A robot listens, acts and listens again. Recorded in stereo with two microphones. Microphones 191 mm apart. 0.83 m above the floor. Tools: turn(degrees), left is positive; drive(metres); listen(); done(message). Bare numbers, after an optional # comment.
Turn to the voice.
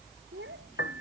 turn(-90)
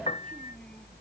listen()
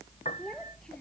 done("Facing the child speaking.")